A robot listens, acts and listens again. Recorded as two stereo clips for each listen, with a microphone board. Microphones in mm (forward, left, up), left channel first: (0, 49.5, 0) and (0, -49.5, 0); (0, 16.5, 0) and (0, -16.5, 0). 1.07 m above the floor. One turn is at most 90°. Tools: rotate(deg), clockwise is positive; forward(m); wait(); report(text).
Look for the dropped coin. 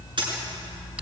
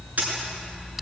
rotate(50)
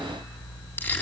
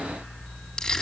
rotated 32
wait()
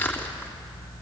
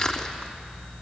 report("I heard a dropped coin, but can't make it out now. It was about 20° right or 95° right.")